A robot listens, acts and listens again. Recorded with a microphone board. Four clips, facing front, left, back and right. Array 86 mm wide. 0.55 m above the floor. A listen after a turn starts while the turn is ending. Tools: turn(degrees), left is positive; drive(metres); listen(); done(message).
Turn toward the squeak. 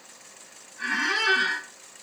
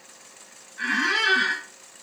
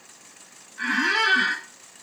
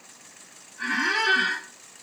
turn(degrees=130)
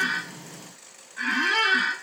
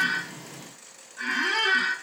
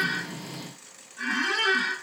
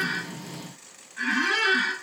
turn(degrees=-45)
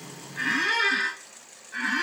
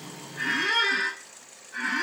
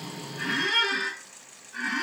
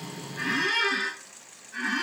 done("Found it: a squeak, straight ahead.")